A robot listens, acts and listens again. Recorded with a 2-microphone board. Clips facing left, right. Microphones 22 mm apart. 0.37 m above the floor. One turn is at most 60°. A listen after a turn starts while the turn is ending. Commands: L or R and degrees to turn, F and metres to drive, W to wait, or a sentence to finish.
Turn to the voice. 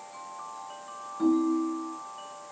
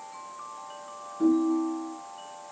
W
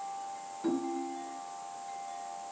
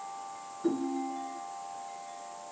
W
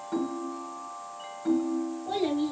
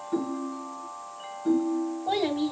R35
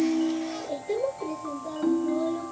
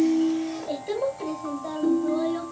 R60
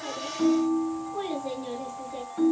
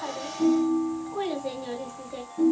R30
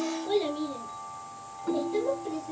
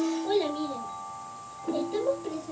R25
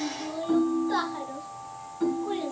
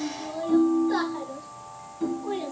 Facing the child speaking.